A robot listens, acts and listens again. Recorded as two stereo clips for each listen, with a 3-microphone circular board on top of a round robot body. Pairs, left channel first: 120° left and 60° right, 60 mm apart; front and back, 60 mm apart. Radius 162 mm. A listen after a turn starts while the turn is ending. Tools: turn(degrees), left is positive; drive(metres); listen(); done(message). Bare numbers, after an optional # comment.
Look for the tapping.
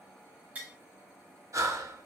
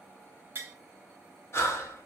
# The tapping: 125° right.
turn(-125)
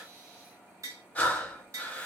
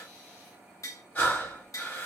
# The tapping is now 30° right.
turn(-30)
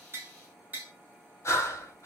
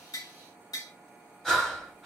done("Found it: tapping, straight ahead, 1 to 2 m away.")